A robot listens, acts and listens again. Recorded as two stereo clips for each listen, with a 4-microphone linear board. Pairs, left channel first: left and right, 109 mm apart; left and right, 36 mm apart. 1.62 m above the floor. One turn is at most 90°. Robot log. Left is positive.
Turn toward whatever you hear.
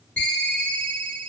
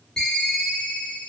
cmd yaw +30
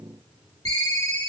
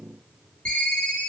note: So it is at 140° left.
cmd yaw +90
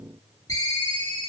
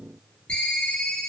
note: The ringtone is now 40° left.
cmd yaw +40
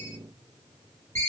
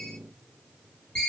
note: The ringtone is now 25° left.
cmd yaw +25
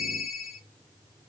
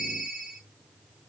end: Found it: a ringtone, straight ahead, 1 to 2 m away.